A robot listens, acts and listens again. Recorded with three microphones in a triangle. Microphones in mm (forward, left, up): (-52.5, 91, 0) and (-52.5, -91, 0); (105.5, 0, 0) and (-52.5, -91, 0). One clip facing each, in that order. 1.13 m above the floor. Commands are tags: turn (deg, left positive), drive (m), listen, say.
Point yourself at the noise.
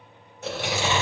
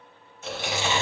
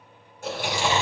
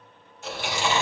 <turn deg="70"/>
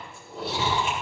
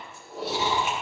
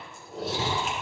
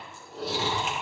<say>Found it: chewing, straight ahead.</say>